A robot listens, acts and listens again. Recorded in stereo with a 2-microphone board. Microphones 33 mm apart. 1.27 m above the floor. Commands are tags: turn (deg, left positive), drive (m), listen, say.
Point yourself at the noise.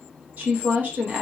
<turn deg="-60"/>
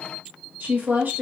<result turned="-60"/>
<turn deg="-60"/>
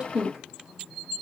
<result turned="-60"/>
<turn deg="-25"/>
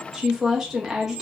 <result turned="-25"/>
<turn deg="-10"/>
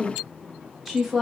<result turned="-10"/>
<say>Facing the woman speaking.</say>